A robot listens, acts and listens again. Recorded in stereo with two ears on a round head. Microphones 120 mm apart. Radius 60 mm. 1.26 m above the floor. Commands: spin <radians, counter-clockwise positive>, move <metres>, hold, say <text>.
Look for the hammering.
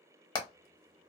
spin 0.52
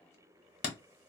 spin 1.92
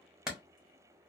say Found it: hammering, straight ahead.